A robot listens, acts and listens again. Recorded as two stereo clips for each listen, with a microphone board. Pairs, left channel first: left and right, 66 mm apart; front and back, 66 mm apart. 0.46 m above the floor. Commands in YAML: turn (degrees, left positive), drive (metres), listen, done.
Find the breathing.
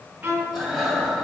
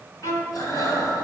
done: "Found it: breathing, straight ahead."